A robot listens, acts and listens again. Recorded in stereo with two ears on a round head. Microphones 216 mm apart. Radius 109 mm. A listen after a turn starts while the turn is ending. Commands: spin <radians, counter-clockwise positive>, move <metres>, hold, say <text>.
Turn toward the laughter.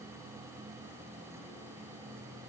hold
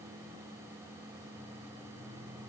hold
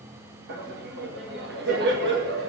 spin -0.79
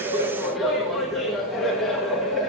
say Facing the laughter, 1 to 2 m away.